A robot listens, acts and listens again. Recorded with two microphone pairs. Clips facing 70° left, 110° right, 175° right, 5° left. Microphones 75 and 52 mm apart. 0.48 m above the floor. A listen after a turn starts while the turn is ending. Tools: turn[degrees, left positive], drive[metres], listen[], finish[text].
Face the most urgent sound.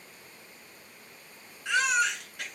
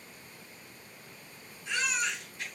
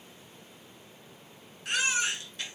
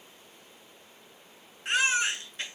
Thought: The baby crying: 65° left.
Action: turn[65]
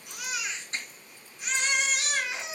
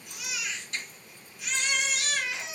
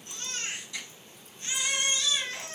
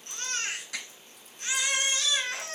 Thought: The baby crying is now 10° left.
Action: turn[10]
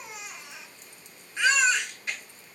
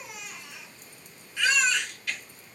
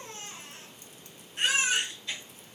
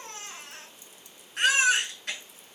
Action: finish[Found it: a baby crying, straight ahead, 1 to 2 m away.]